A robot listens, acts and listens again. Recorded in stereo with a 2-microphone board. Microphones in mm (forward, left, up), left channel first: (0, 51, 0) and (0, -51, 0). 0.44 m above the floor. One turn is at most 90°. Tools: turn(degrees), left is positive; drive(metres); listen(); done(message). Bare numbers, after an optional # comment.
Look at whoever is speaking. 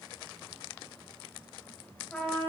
listen()
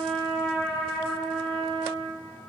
listen()
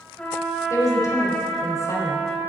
# The woman speaking: about 35° left or 145° left.
turn(35)
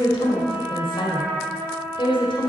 # So it is at 110° left.
turn(90)
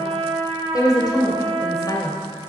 # The woman speaking is now 50° left.
turn(50)
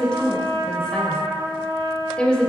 # The woman speaking is now 10° left.
turn(10)
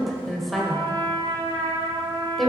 done("Found it: a woman speaking, straight ahead, 1 to 2 m away.")